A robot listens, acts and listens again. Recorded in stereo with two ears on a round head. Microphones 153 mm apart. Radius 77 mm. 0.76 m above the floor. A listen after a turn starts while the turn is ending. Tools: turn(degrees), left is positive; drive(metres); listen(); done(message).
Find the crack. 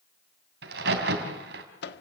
turn(degrees=-65)
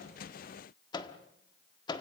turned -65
listen()
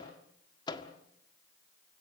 done("I heard a crack, but can't make it out now. It was about straight ahead or 50° right.")